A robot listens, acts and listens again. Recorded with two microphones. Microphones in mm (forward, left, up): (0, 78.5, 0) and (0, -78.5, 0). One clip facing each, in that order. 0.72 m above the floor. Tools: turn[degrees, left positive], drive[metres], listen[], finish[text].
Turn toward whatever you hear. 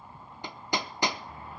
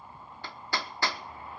Thought: The hammering: about 20° left or 160° left.
Action: turn[20]
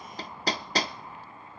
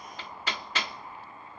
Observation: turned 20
Thought: So it is at 140° left.
Action: turn[140]
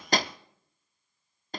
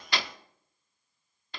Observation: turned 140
Thought: The hammering is now 45° left.
Action: turn[45]
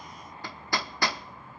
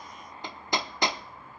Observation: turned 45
Thought: The hammering is now 20° right.
Action: turn[-20]
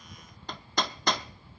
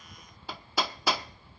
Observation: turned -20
Action: finish[Facing the hammering, under 1 m away.]